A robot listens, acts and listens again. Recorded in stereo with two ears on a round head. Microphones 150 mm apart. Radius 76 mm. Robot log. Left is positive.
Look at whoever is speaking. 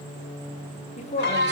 note: The woman speaking: about 45° left or 135° left.
cmd yaw +45
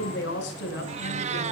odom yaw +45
note: So it is at 90° left.
cmd yaw +90
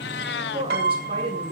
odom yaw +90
note: The woman speaking is now 35° right.
cmd yaw -35
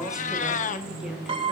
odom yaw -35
end: Found it: a woman speaking, straight ahead.